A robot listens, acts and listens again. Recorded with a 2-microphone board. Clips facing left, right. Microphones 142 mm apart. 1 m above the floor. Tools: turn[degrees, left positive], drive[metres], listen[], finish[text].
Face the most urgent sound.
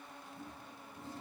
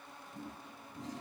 Action: listen[]
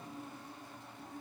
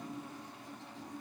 Action: listen[]
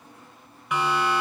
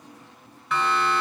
Action: turn[30]
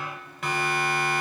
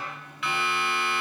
Thought: So it is at 140° left.
Action: turn[140]
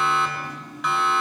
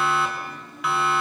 Action: finish[Facing the siren, over 4 m away.]